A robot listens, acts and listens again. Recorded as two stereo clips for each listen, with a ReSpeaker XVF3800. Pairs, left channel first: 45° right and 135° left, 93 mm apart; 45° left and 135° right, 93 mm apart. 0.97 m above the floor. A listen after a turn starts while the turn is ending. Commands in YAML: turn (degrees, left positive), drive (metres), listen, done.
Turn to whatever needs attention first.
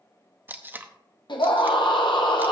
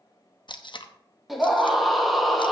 turn: -45
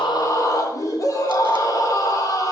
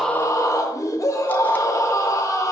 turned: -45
done: "Found it: a scream, straight ahead, 1 to 2 m away."